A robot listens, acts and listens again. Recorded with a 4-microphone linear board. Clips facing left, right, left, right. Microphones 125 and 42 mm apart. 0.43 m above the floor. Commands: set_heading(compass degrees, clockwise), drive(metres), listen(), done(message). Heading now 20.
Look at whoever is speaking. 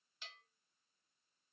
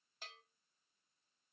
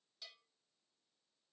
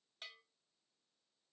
listen()
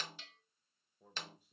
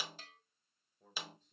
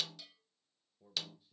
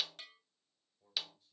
set_heading(350)
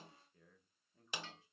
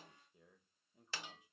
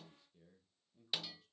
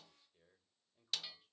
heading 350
set_heading(5)
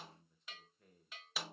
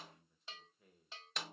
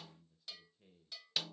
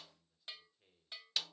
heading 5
done("Facing the man speaking, 1 to 2 m away.")